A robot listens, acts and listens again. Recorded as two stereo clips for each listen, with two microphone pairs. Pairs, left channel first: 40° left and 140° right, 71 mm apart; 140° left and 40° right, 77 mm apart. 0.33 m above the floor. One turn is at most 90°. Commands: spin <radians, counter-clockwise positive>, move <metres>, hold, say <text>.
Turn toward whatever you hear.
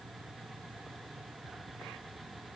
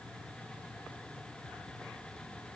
hold
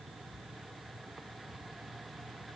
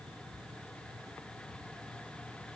hold
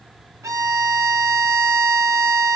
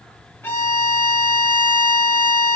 spin -1.57
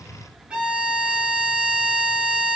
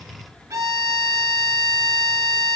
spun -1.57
spin -1.13
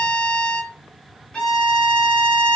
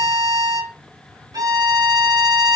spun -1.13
spin -0.61
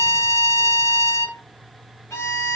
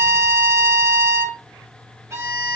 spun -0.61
say Found it: a violin, straight ahead.